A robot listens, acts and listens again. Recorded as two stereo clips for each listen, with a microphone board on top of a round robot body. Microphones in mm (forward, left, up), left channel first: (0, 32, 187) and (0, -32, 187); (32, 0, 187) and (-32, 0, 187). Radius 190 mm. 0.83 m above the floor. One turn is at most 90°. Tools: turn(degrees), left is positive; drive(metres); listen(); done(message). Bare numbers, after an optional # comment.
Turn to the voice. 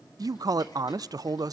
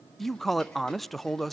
# The man speaking: 90° right.
turn(-90)
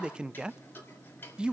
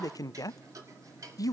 # The man speaking is now 15° right.
turn(-15)
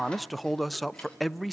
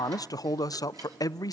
done("Facing the man speaking, under 1 m away.")